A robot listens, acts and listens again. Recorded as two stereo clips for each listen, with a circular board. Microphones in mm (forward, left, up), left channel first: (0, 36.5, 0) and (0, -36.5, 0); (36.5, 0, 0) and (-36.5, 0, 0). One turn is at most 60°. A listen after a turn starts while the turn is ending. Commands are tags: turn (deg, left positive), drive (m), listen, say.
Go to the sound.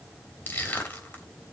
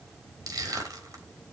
<turn deg="60"/>
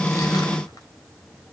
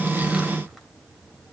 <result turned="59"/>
<turn deg="60"/>
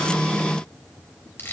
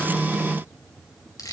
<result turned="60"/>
<turn deg="30"/>
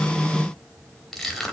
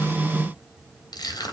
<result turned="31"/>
<drive m="1.0"/>
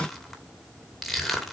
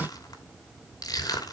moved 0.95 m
<drive m="1.0"/>
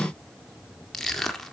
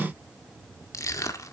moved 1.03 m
<drive m="1.0"/>
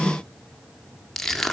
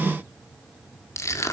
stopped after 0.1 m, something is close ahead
<say>Arrived at the crushing, straight ahead.</say>